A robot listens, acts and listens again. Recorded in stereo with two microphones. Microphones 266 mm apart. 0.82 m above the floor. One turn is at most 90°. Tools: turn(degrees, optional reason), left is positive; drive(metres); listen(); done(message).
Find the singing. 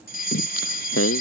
turn(degrees=65, reason="The singing: about 65° left or 115° left.")
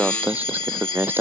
turn(degrees=-10, reason="So it is at 10° right.")
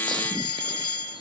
listen()
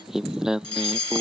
done("Found it: singing, straight ahead.")